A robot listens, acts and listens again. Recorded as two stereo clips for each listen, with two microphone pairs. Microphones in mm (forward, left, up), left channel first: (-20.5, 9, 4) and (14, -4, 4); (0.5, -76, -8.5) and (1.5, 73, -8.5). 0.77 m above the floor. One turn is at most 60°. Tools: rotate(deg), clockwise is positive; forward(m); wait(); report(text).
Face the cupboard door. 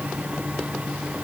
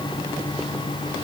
wait()
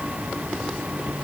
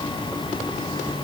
wait()
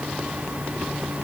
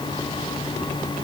report("I can't make out a cupboard door to turn to.")